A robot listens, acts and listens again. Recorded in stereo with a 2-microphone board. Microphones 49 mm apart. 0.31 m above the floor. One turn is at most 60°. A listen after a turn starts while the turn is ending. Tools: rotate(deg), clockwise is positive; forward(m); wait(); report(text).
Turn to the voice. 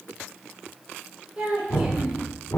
rotate(20)
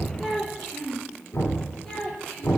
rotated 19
rotate(-15)
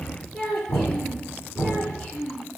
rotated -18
rotate(-15)
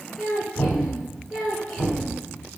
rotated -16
report("Found it: a child speaking, straight ahead.")